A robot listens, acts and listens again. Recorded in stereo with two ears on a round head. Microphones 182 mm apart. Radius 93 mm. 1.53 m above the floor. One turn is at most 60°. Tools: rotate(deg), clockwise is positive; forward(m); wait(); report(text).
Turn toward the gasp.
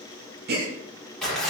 rotate(45)
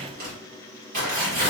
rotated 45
wait()
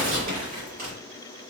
report("I heard a gasp, but can't make it out now. It was about straight ahead or 90° right.")